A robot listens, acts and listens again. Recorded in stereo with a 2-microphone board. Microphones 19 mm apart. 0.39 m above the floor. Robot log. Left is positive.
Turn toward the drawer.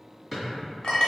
cmd yaw -30
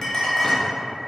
cmd idle
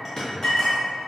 note: So it is at 25° left.
cmd yaw +25
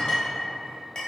cmd idle
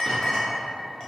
cmd idle
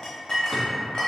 end: Facing where the drawer came from. I can't hear it now.